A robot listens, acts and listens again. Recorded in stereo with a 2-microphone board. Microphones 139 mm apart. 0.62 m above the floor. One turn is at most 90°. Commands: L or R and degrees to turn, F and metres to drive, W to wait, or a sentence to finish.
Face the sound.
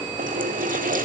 R90
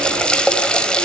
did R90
Found it: a running tap, straight ahead, 2 to 4 m away.